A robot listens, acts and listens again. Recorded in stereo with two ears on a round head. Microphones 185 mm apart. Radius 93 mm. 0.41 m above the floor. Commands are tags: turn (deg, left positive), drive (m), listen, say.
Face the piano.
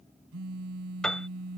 <turn deg="30"/>
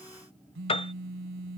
<turn deg="150"/>
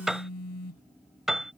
<say>Found it: a piano, straight ahead.</say>